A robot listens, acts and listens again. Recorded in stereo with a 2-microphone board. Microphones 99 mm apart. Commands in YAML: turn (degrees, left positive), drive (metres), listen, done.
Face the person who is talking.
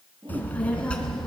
turn: 30
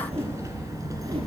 turn: -40
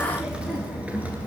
turn: -15
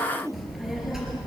done: "Facing the child speaking, 2 to 4 m away."